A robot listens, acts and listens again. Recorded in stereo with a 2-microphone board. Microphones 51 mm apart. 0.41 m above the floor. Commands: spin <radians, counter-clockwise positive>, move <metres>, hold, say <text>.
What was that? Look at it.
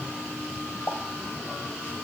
spin 0.87
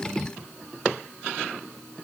hold
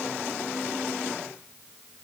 say I heard a pop, but can't make it out now. It was about straight ahead or 80° left.